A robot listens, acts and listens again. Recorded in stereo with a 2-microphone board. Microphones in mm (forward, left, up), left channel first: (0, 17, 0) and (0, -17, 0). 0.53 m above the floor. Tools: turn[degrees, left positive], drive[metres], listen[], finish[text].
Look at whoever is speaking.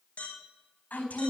Thought: The woman speaking: about 75° left or 105° left.
Action: turn[75]
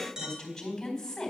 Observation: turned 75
Thought: So it is at 10° left.
Action: turn[10]
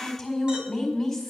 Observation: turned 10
Action: finish[Facing the woman speaking.]